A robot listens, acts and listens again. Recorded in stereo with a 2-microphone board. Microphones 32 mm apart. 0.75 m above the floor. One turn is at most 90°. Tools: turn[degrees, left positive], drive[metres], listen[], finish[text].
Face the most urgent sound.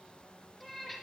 Action: listen[]
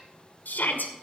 Thought: The shout: about 75° left or 105° left.
Action: turn[75]
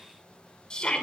Thought: So it is at 30° left.
Action: turn[30]
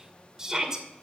Thought: The shout is now 20° right.
Action: turn[-20]
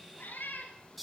Action: finish[Found it: a shout, straight ahead, 2 to 4 m away.]